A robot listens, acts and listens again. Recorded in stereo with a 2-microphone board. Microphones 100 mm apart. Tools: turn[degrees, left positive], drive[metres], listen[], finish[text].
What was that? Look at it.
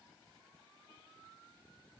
Action: listen[]
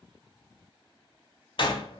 Thought: The door slam: about 55° left or 125° left.
Action: turn[55]
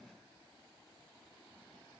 Action: listen[]
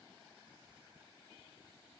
Action: finish[I heard a door slam, but can't make it out now. It was about straight ahead or 70° left.]